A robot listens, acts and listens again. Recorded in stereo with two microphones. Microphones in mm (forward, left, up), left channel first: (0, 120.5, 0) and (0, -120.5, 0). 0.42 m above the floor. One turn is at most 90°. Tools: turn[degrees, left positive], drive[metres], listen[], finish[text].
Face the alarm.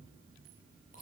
Action: listen[]
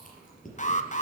Thought: The alarm: about 30° left or 150° left.
Action: turn[30]
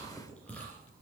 Action: listen[]
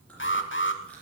Thought: So it is at 115° left.
Action: turn[90]
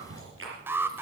Thought: The alarm is now 10° right.
Action: turn[-10]
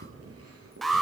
Action: finish[Facing the alarm, 1 to 2 m away.]